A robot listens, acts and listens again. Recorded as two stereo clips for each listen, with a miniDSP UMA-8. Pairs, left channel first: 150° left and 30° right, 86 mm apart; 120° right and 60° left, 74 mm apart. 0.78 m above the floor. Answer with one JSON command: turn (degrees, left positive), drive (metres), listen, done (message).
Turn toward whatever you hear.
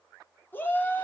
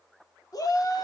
{"turn": -145}
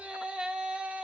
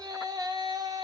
{"turn": 45}
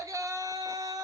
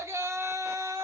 {"turn": 15}
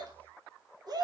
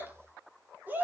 {"done": "Facing the shout."}